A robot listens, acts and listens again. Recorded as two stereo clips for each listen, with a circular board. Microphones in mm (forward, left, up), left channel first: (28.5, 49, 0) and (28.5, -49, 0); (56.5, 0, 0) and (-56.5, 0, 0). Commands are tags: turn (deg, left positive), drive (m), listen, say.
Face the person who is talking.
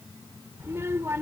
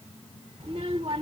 <turn deg="-155"/>
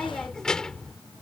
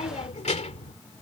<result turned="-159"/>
<say>Facing the child speaking.</say>